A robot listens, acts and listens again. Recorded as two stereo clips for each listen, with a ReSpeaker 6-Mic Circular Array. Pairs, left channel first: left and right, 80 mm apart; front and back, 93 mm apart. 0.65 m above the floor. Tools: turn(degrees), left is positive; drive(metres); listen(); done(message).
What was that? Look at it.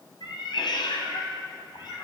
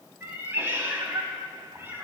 turn(degrees=110)
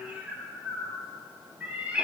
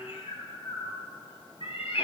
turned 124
turn(degrees=-15)
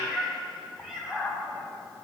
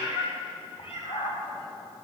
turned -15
done("Found it: a cat meowing, straight ahead.")